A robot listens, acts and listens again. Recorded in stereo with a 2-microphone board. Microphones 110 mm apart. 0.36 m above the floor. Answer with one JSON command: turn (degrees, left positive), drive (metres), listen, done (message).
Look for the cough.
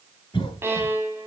{"turn": 50}
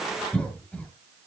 {"turn": 15}
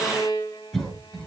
{"done": "Found it: a cough, straight ahead."}